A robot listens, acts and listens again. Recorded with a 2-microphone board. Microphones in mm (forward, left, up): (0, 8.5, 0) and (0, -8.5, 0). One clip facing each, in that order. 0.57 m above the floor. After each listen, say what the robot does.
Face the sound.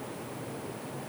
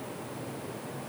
Keep listening.
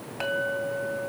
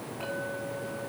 Turn 55° left.
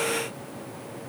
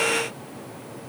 Keep listening.
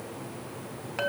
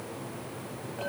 Turn 70° left.
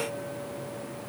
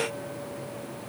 Keep listening.
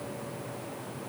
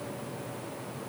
Keep listening.
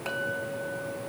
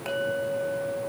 Found it: a clink, straight ahead, 2 to 4 m away.